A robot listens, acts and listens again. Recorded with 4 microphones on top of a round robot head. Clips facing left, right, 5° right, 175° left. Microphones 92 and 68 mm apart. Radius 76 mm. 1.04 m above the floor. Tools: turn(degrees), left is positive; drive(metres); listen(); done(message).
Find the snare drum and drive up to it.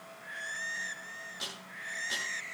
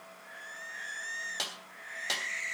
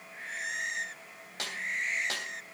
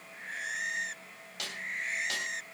turn(degrees=-70)
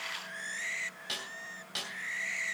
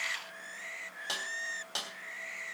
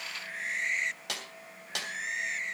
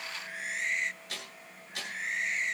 turn(degrees=-25)
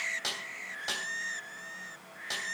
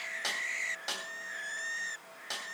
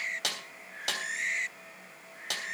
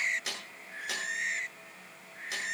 drive(metres=1.0)
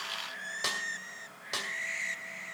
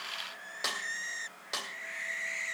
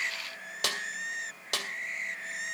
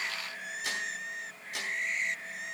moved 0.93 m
drive(metres=1.0)
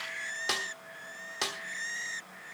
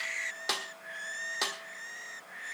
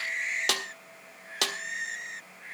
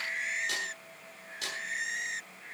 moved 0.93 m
drive(metres=1.0)
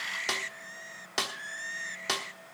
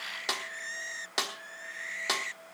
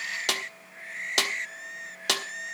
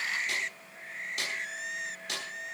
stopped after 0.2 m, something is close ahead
done("I am next to the snare drum.")